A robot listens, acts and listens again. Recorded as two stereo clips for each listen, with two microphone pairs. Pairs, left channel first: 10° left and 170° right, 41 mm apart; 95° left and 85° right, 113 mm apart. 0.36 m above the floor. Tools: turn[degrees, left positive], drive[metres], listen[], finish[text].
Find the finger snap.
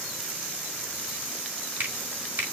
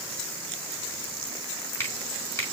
Thought: The finger snap: 160° left.
Action: turn[160]
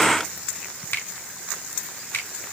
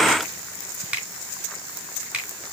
Thought: The finger snap is now 10° right.
Action: turn[-10]
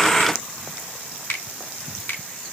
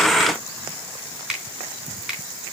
Action: finish[Facing the finger snap.]